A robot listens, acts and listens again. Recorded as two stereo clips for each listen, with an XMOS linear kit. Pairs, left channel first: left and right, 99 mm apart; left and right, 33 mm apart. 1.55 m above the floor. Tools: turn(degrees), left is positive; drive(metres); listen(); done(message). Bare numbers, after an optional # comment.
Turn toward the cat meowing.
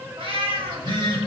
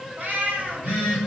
# The cat meowing: about 60° right or 120° right.
turn(-60)
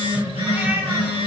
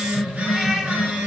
# So it is at 25° right.
turn(-25)
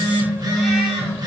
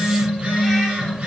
listen()
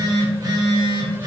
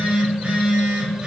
listen()
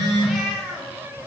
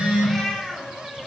done("Facing the cat meowing, 1 to 2 m away.")